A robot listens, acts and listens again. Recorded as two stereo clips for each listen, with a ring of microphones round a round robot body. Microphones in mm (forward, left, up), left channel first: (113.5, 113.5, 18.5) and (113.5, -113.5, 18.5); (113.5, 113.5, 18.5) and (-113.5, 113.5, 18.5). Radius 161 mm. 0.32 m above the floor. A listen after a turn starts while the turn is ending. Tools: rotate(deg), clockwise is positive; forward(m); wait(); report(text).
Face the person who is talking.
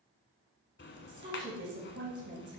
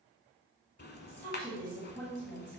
rotate(65)
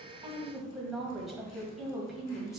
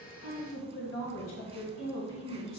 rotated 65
report("Found it: a woman speaking, straight ahead, 1 to 2 m away.")